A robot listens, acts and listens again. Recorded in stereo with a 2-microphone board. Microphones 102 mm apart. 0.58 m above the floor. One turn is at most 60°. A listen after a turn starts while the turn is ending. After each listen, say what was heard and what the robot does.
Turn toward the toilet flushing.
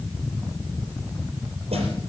Keep listening.
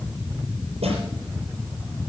Keep listening.
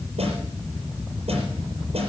I can't make out a toilet flushing, only a snare drum.